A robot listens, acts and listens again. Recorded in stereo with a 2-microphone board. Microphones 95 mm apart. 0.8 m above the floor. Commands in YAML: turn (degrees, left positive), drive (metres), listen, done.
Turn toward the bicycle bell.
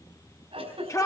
listen: true
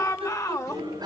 turn: -45
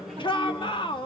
listen: true
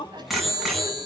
done: "Found it: a bicycle bell, straight ahead, over 4 m away."